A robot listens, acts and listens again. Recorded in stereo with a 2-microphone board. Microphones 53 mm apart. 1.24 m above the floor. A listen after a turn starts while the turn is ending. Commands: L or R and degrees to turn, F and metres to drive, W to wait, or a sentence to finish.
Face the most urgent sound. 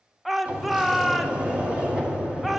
L30
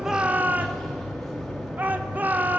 R30
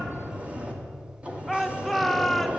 Facing the shout.